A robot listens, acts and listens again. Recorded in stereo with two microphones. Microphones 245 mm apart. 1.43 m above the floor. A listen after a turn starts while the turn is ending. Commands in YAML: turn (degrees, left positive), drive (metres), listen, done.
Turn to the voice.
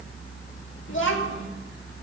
turn: 55
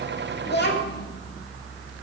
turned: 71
turn: 50
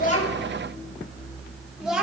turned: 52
done: "Found it: a child speaking, straight ahead."